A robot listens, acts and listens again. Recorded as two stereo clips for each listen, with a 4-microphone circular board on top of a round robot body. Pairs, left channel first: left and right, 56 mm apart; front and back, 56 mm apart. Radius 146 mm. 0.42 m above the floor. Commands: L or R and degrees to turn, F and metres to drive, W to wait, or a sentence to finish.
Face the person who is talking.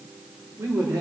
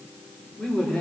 R70
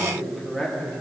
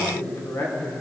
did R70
L10
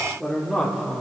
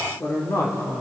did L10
L10
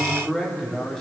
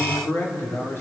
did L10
L15
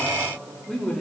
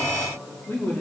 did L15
L20
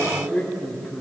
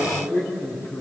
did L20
L10
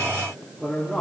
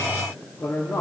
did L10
Facing the man speaking.